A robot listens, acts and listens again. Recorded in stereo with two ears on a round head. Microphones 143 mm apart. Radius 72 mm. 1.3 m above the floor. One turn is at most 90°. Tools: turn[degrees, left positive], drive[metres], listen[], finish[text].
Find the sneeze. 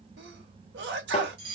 Action: turn[-90]
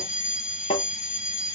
Action: finish[Facing where the sneeze came from. I can't hear it now.]